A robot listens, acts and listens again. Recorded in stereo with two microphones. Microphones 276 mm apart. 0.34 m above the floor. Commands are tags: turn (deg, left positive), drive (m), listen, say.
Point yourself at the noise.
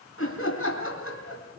<turn deg="50"/>
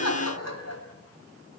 <turn deg="75"/>
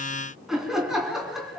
<say>Found it: laughter, straight ahead.</say>